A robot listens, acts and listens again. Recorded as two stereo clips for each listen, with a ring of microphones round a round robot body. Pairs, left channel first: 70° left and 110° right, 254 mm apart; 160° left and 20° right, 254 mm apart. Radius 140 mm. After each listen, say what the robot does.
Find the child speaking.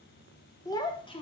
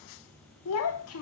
Turn 135° left.
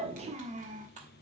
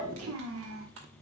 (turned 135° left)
Turn 55° right.
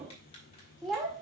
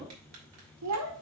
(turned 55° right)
Turn 25° right.
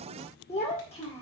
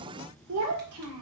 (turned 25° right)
Facing the child speaking, 2 to 4 m away.